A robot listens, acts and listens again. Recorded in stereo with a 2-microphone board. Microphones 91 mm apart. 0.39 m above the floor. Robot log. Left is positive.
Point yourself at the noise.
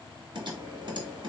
note: The typing on a keyboard: about 60° right or 120° right.
cmd yaw -60
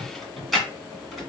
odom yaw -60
end: Facing the typing on a keyboard, 1 to 2 m away.